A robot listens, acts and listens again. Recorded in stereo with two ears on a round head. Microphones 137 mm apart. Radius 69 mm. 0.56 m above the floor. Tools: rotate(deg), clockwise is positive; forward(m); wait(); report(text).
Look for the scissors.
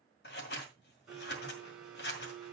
rotate(-75)
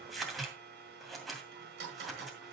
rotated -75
report("Facing the scissors, 2 to 4 m away.")